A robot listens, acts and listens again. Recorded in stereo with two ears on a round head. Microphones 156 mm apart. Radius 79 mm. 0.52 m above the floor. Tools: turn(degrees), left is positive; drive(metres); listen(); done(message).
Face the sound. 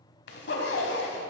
turn(degrees=70)
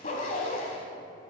turn(degrees=40)
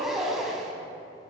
done("Facing the zipper, 1 to 2 m away.")